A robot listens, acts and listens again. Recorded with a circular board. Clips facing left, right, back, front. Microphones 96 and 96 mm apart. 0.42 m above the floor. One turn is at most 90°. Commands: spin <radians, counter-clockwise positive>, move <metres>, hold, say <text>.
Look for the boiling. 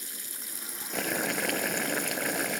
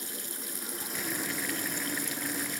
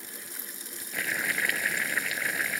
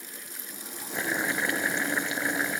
spin 1.13
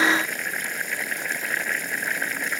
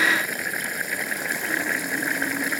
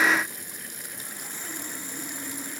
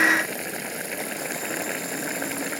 say Facing the boiling.